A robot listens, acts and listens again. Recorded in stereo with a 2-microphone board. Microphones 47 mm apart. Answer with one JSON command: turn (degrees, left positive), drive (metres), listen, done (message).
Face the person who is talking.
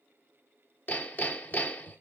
{"listen": true}
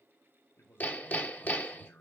{"turn": 55}
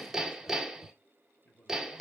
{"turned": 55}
{"turn": 55}
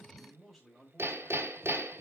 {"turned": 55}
{"done": "Found it: a man speaking, straight ahead."}